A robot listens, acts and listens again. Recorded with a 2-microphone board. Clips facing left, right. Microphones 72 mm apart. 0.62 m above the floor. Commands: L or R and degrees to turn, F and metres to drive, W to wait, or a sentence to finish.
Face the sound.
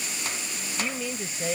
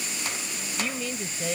L30
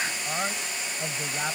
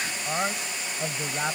R10
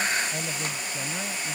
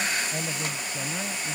W
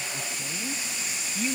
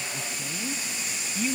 Found it: a man speaking, straight ahead.